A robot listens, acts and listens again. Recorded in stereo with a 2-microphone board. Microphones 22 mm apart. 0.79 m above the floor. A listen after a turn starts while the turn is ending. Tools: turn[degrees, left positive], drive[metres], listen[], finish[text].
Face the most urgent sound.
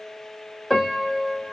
Action: listen[]
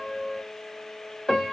Action: listen[]
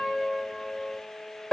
Action: finish[I can't make out anything urgent, only a piano.]